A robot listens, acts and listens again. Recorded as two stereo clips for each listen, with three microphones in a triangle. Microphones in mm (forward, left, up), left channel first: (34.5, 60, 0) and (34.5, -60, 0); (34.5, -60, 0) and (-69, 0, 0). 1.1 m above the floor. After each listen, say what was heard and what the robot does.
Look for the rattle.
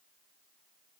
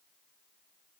Keep listening.
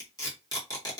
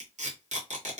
Keep listening.
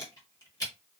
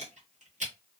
I can't make out a rattle, only tape being pulled.